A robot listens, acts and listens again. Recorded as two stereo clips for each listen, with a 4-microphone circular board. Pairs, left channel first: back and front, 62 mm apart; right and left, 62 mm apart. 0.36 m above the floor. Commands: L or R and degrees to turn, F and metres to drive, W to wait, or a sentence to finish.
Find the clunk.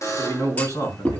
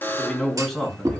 L115
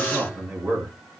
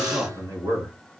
I heard a clunk from this way, but can't make it out now.